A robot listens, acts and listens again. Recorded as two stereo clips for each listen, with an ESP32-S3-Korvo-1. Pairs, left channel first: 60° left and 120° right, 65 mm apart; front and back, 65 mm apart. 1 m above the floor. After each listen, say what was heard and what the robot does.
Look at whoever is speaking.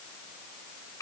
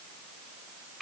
Keep listening.
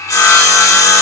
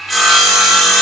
Keep listening.
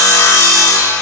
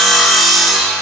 I can't make out anyone speaking to turn to.